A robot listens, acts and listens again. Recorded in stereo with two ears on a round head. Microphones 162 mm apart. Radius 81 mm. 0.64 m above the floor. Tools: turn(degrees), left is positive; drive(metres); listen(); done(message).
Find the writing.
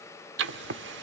turn(degrees=-70)
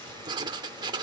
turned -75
turn(degrees=-25)
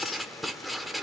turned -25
done("Found it: writing, straight ahead.")